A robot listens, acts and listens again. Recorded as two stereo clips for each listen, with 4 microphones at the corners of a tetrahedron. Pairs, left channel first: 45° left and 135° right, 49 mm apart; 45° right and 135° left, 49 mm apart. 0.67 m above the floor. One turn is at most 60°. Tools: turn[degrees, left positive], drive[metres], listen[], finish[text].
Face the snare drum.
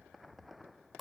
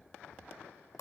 Action: listen[]
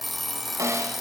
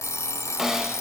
Thought: The snare drum: 145° right.
Action: turn[-60]
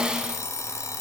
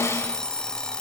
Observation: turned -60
Thought: The snare drum is now 65° right.
Action: turn[-60]
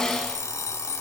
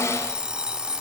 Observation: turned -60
Thought: The snare drum is now 30° right.
Action: turn[-30]
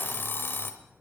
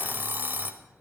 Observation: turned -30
Action: listen[]
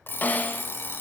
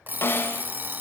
Action: finish[Found it: a snare drum, straight ahead, 1 to 2 m away.]